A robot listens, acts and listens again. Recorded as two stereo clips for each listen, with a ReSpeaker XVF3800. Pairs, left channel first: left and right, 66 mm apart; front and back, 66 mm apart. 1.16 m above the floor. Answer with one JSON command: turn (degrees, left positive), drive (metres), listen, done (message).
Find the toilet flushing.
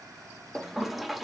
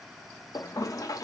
{"done": "Found it: a toilet flushing, straight ahead."}